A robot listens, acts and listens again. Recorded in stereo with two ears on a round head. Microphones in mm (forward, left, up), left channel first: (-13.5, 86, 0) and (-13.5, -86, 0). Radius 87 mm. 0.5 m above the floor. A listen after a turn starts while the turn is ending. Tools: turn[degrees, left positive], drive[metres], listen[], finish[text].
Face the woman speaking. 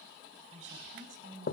Thought: The woman speaking: about 50° right or 130° right.
Action: turn[-50]
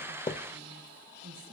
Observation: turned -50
Thought: So it is at 60° right.
Action: turn[-60]
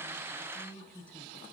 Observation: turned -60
Action: finish[Found it: a woman speaking, straight ahead.]